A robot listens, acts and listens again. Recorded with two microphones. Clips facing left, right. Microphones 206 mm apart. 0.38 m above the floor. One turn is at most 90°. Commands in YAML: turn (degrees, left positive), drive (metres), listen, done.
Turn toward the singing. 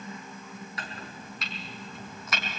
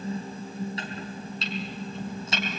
listen: true
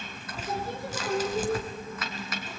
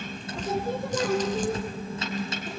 turn: -50
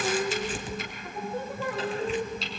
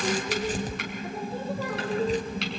turn: -85
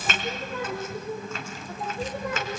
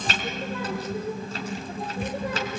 turn: -30
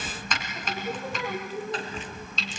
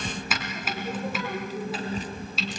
done: "Facing the singing, over 4 m away."